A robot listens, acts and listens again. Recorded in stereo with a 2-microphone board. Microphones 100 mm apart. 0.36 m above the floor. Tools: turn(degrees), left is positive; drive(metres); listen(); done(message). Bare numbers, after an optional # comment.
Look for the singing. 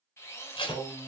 # The singing: about 35° right or 145° right.
turn(-35)
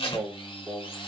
done("Found it: singing, straight ahead.")